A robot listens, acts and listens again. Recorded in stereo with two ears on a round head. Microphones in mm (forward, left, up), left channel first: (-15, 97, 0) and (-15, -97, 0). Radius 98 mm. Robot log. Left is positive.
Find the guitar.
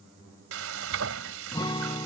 note: The guitar: about 20° left or 160° left.
cmd yaw +20
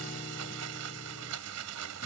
cmd idle
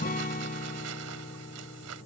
note: So it is at 135° left.
cmd yaw +135
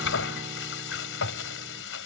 cmd idle
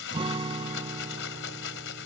note: The guitar is now 25° right.
cmd yaw -25
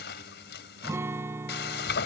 note: The guitar is now 15° right.
cmd yaw -15
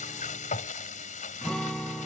end: Facing the guitar.